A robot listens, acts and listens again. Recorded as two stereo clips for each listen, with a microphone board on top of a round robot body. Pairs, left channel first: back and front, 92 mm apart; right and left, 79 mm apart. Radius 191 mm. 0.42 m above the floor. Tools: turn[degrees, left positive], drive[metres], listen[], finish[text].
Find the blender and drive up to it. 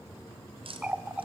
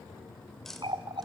Action: listen[]
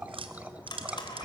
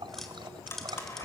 Thought: The blender: 145° right.
Action: turn[-145]
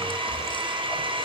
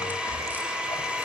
Thought: The blender is now 15° left.
Action: turn[15]
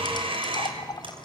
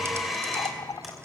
Action: drive[1.0]
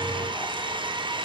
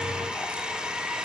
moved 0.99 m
Thought: The blender is now 10° left.
Action: turn[10]
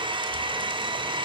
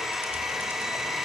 Action: drive[1.0]
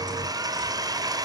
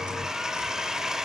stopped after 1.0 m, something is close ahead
Thought: The blender is now 10° left.
Action: turn[10]
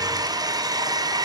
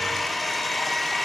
Action: finish[Arrived at the blender, straight ahead.]